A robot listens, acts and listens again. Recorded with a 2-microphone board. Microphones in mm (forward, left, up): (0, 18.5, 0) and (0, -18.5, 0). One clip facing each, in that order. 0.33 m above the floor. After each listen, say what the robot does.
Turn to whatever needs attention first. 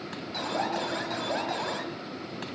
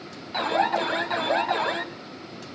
Turn 35° right.
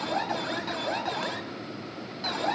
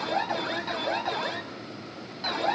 Found it: an alarm, straight ahead.